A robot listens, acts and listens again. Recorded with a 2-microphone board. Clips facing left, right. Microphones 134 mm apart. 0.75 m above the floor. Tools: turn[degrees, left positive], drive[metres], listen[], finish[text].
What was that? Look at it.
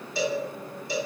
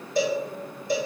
Thought: The cowbell: about 45° right or 135° right.
Action: turn[-45]
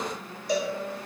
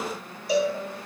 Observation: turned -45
Action: finish[Facing the cowbell.]